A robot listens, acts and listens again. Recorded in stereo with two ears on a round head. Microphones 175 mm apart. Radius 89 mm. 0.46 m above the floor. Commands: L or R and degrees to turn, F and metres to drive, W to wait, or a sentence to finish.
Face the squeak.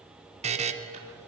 W
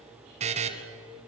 W
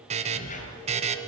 L40
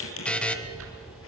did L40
L95
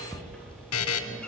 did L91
Found it: a squeak, straight ahead.